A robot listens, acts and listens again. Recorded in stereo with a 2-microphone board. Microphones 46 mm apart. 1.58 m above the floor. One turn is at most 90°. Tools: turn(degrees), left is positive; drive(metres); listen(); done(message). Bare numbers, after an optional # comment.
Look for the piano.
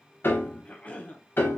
# The piano: about 50° left or 130° left.
turn(50)
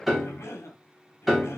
done("Facing the piano, under 1 m away.")